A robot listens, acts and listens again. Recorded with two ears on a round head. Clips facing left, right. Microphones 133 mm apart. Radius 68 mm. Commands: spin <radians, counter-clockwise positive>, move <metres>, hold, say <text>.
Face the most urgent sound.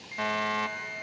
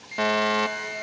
spin -1.05
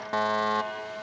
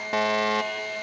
spin -0.44
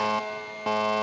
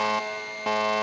say Facing the fire alarm.